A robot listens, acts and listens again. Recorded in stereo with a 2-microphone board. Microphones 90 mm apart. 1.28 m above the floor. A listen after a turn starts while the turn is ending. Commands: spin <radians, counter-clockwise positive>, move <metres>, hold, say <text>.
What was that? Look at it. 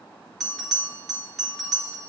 spin 0.52
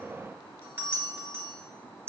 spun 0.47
spin -0.44
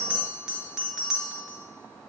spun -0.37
say Facing the bell.